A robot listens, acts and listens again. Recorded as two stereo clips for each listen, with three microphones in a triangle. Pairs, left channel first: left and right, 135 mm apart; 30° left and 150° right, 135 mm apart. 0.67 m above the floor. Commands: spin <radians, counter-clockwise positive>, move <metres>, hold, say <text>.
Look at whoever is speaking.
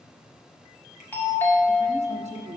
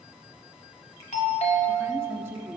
spin -1.40
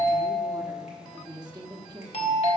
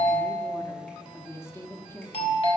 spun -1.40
spin -0.70
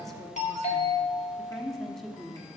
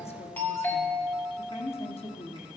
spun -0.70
say Found it: a woman speaking, straight ahead, 1 to 2 m away.